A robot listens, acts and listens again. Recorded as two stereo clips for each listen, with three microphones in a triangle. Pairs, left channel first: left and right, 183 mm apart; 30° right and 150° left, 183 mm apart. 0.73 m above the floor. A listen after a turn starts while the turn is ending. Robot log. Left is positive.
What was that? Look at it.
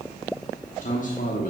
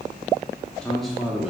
note: The man speaking: 65° left.
cmd yaw +65
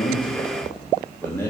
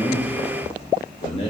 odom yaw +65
note: The man speaking is now 20° left.
cmd yaw +20
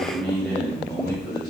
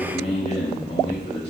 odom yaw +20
note: The man speaking is now 25° left.
cmd yaw +25
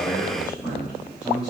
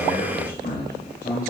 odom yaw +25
end: Facing the man speaking, 1 to 2 m away.